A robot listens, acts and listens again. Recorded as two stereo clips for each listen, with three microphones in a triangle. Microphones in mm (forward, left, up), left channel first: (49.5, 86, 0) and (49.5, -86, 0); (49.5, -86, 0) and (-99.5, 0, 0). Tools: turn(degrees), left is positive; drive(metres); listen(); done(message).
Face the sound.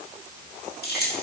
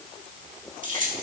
turn(degrees=110)
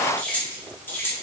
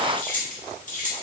turn(degrees=15)
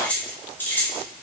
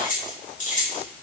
turn(degrees=10)
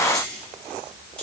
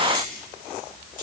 done("Found it: keys jangling, straight ahead, 2 to 4 m away.")